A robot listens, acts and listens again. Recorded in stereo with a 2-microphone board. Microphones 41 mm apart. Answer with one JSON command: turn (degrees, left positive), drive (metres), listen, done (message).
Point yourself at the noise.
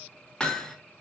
{"turn": 20}
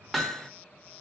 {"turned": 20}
{"done": "Found it: hammering, straight ahead."}